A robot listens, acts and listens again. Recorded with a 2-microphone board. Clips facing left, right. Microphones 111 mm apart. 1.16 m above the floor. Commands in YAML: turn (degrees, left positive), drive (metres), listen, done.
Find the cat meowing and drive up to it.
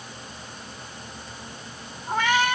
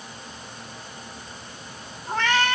turn: 30
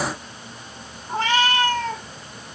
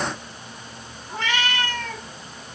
turn: 140
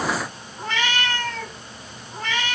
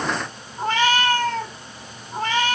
turn: -40
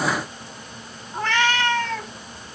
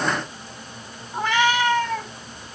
turn: -10
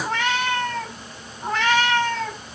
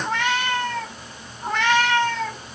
drive: 1.0
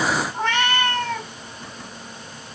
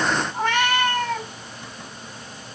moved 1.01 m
drive: 1.0
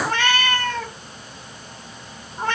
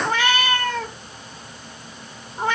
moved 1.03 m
turn: -10
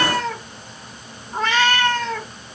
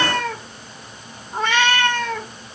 drive: 1.0
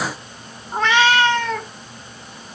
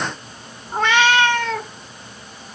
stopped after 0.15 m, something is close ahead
done: "I am next to the cat meowing."